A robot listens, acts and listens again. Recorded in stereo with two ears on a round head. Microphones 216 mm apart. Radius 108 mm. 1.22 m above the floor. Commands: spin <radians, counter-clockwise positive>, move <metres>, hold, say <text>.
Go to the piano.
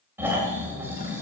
hold
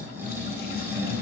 hold
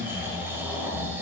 say I can't make out a piano, only snoring.